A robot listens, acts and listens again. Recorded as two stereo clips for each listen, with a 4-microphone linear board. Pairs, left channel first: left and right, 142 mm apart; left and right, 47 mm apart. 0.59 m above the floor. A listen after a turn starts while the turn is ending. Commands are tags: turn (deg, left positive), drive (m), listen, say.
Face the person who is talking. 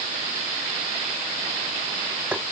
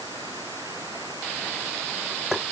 <listen/>
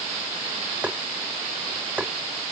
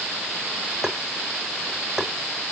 <listen/>
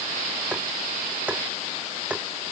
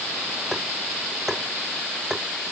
<say>I can't make out anyone speaking, only tapping.</say>